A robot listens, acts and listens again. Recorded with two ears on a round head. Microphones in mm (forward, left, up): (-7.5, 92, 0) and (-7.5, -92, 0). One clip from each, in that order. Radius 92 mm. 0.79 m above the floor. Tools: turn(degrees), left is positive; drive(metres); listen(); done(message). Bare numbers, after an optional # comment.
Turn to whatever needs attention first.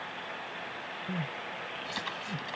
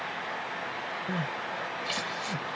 # The crying: about 40° right or 140° right.
turn(-40)
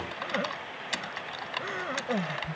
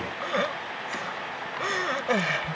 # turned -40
# So it is at 105° right.
turn(-105)
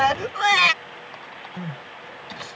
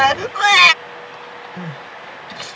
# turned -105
# The crying is now 25° right.
turn(-25)
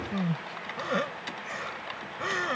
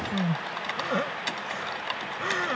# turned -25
# The crying is now 15° left.
turn(15)
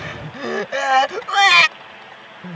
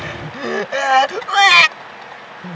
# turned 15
done("Facing the crying.")